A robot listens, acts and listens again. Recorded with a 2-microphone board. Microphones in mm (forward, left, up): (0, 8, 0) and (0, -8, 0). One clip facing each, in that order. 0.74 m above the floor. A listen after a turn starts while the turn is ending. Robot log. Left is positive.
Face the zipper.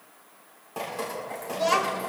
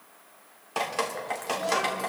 cmd idle
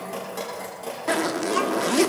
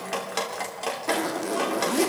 note: The zipper: about 20° left or 160° left.
cmd yaw +20
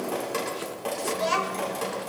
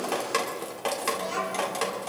cmd idle
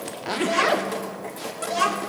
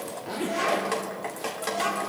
note: So it is at 135° left.
cmd yaw +135
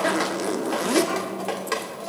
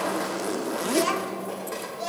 note: The zipper is now 15° left.
cmd yaw +15
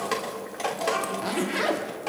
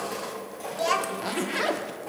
end: Found it: a zipper, straight ahead.